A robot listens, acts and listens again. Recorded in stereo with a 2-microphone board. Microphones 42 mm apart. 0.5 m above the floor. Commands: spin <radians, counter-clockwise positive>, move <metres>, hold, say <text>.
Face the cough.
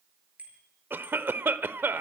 spin -1.05
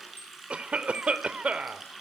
spin -0.61
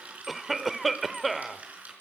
say Facing the cough.